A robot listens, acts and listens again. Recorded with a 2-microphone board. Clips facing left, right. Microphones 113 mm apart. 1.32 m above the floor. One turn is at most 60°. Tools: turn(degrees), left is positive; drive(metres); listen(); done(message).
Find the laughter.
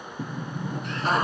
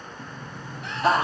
turn(degrees=-60)
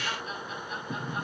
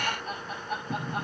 turn(degrees=-45)
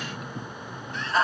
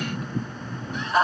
turn(degrees=-20)
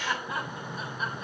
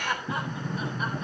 done("Found it: laughter, straight ahead, over 4 m away.")